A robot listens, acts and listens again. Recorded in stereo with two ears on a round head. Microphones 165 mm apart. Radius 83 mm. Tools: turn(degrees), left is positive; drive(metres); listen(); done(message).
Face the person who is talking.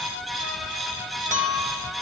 listen()
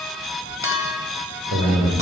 turn(degrees=-75)
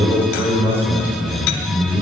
turn(degrees=-15)
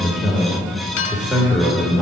done("Found it: a man speaking, straight ahead.")